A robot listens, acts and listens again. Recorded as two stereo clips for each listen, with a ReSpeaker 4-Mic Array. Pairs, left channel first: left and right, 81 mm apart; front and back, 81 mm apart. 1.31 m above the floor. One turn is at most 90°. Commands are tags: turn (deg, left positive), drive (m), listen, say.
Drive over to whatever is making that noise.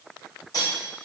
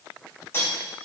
<turn deg="60"/>
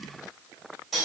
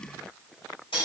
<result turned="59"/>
<drive m="1.0"/>
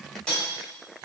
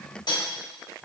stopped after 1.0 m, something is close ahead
<turn deg="10"/>
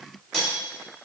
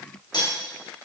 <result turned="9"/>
<say>Arrived at the cutlery clinking, straight ahead.</say>